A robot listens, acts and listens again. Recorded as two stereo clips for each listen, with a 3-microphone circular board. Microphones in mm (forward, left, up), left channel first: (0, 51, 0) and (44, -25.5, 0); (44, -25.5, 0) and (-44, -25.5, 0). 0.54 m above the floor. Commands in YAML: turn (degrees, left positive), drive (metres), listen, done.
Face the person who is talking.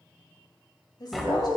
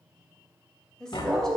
turn: 80
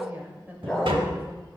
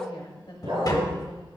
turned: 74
turn: 10
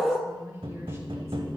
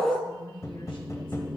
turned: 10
listen: true
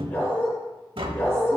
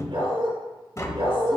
listen: true
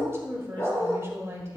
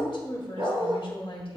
done: "Found it: a woman speaking, straight ahead, 1 to 2 m away."